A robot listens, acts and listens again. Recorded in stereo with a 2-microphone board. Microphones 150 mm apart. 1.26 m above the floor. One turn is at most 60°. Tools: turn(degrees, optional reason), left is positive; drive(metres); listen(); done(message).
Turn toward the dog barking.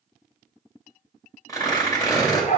turn(degrees=55, reason="The dog barking: about 55° left or 125° left.")
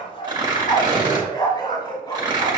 turn(degrees=30, reason="So it is at 30° left.")
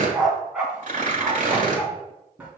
turn(degrees=-10, reason="The dog barking is now 10° right.")
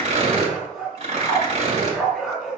done("Facing the dog barking.")